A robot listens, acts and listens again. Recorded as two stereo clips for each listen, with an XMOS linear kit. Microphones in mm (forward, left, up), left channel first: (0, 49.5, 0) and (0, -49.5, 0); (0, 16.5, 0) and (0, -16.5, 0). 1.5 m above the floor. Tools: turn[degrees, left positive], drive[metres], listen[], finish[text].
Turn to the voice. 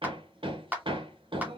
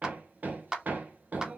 Action: listen[]
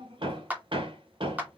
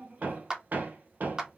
Action: listen[]
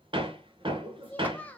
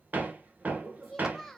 Action: turn[30]
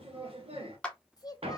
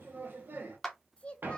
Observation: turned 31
Thought: So it is at 130° left.
Action: turn[130]
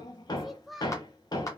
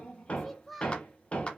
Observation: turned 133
Action: finish[Found it: a child speaking, straight ahead.]